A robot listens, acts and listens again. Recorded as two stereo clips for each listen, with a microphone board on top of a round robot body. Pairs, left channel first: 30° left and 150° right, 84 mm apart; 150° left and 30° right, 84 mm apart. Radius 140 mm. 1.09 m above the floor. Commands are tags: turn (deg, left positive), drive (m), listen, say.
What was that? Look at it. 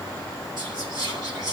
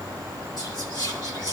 <turn deg="180"/>
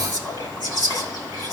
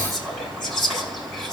<turn deg="60"/>
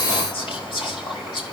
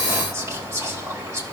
<turn deg="25"/>
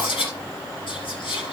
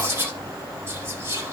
<turn deg="30"/>
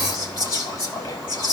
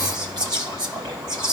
<turn deg="-10"/>
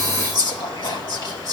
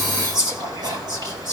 <say>Found it: whispering, straight ahead.</say>